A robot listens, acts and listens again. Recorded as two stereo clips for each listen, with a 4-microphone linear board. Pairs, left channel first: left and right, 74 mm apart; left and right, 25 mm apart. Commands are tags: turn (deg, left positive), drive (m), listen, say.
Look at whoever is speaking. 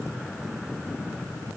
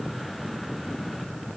<listen/>
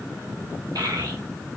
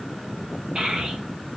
<turn deg="-65"/>
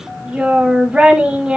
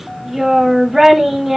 <turn deg="-15"/>
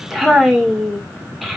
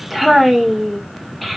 <say>Facing the child speaking.</say>